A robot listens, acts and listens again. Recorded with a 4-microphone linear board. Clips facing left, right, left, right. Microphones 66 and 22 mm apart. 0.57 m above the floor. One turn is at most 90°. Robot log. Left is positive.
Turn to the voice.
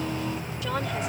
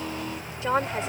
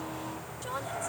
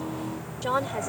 note: The woman speaking: about 30° right or 150° right.
cmd yaw -30
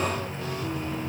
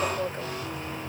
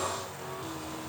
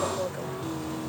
cmd idle
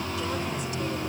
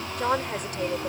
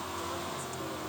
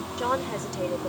note: So it is at 115° right.
cmd yaw -90
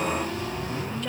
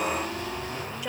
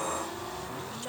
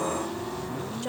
note: Nothing new. It was at 25° right.
cmd yaw -25
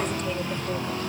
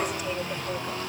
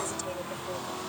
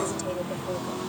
cmd idle
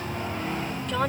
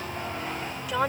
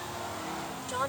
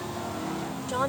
note: The woman speaking is now 10° right.
cmd yaw -10
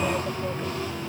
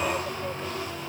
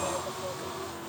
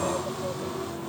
cmd idle
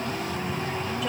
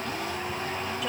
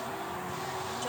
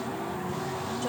cmd idle
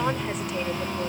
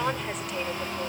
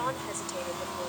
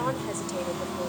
end: Facing where the woman speaking came from. I can't hear it now.